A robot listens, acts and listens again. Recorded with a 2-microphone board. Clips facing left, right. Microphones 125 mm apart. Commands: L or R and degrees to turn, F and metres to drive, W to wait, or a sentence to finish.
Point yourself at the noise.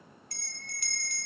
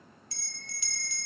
L50
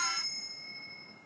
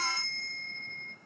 L15
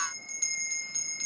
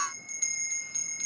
Facing the bell, under 1 m away.